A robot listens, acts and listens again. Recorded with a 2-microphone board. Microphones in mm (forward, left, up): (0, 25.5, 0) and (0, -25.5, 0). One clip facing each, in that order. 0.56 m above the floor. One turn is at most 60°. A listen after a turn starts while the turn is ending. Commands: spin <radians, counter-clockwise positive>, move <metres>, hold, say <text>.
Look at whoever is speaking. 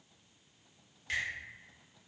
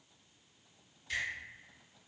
hold
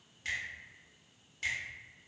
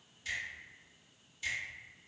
hold
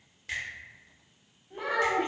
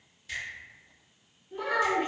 spin 0.87
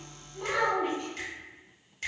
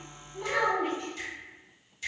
say Found it: a child speaking, straight ahead, 1 to 2 m away.